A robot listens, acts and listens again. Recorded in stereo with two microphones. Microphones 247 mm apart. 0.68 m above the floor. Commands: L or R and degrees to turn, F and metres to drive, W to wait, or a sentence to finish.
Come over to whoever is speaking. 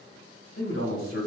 L60
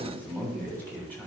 L10
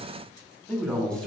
F1.0
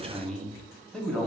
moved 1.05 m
F1.0
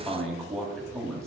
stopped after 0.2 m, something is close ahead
Arrived at the man speaking, straight ahead.